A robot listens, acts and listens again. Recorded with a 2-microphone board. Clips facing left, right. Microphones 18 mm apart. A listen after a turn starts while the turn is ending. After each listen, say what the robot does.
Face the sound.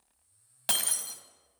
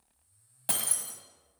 Turn 40° left.
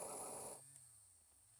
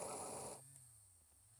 Keep listening.
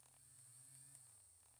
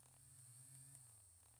I heard breaking glass, but can't make it out now. It was about straight ahead or 100° left.